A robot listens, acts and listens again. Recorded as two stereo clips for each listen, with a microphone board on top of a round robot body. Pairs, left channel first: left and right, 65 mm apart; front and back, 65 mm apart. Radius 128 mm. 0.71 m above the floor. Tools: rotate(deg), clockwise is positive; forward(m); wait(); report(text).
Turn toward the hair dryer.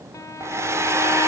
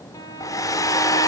rotate(40)
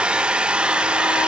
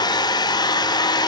rotate(15)
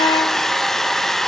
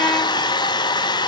report("Facing the hair dryer, 1 to 2 m away.")